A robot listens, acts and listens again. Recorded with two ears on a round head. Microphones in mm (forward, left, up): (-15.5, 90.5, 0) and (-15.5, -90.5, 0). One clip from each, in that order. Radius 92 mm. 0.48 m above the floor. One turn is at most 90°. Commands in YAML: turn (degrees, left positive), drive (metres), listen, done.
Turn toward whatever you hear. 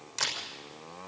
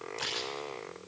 turn: 55
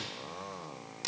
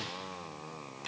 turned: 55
turn: 65
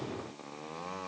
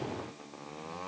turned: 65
listen: true
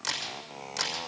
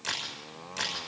turn: 20
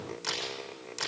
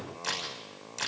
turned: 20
done: "Facing the camera shutter, over 4 m away."